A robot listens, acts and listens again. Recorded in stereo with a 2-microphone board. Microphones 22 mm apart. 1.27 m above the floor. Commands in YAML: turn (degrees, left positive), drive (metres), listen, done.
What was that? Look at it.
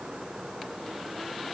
listen: true
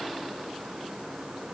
listen: true
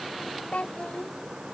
turn: 90
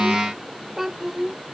turn: -20
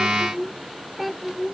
done: "Found it: a child speaking, straight ahead."